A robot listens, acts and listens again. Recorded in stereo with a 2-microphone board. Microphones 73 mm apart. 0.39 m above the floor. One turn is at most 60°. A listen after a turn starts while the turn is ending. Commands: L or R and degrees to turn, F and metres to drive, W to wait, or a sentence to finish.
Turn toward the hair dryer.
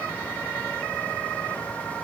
W
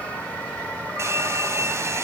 R40
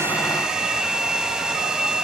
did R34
R10
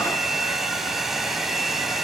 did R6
Found it: a hair dryer, straight ahead.